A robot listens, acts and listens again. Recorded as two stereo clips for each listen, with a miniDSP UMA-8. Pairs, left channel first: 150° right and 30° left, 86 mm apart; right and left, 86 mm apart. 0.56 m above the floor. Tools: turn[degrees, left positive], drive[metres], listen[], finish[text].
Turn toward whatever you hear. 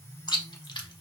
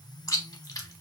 Thought: The chewing: 130° right.
Action: turn[-130]
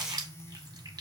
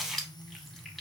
Action: finish[Facing the chewing, under 1 m away.]